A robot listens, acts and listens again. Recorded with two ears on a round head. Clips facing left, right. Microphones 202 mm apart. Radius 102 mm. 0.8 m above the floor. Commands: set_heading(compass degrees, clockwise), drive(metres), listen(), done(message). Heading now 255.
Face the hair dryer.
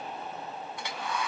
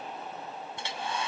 set_heading(280)
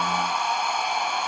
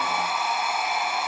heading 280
done("Found it: a hair dryer, straight ahead.")